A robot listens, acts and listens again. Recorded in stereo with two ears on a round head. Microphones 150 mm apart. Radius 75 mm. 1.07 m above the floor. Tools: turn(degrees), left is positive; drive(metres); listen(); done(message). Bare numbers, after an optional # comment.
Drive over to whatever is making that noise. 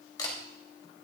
# The camera shutter: about 25° left or 155° left.
turn(25)
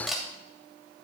drive(1.0)
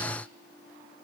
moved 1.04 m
listen()
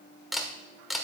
drive(1.0)
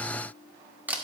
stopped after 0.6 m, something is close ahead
# The camera shutter is now 15° right.
turn(-15)
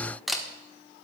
done("I am next to the camera shutter.")